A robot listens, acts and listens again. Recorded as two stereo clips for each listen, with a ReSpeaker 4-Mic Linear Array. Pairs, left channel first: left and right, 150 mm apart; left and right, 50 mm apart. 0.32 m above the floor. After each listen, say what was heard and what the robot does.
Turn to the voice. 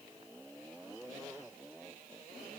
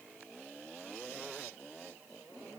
Keep listening.
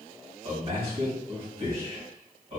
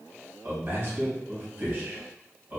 The man speaking: about 45° right or 135° right. Turn 45° right.
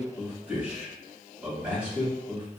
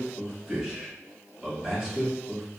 So it is at 10° right. Turn 10° right.
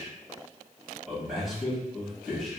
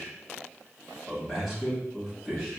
Found it: a man speaking, straight ahead, 1 to 2 m away.